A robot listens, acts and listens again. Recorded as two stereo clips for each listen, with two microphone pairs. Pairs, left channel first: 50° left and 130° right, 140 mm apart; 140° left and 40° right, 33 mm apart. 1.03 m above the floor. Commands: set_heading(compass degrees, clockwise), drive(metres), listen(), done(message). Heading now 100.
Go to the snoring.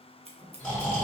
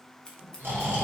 set_heading(130)
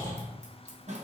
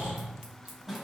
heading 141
set_heading(131)
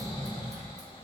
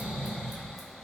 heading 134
drive(1.0)
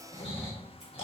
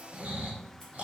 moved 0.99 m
drive(1.0)
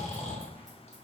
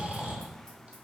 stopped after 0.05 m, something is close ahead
set_heading(124)
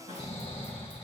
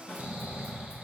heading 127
done("I am next to the snoring.")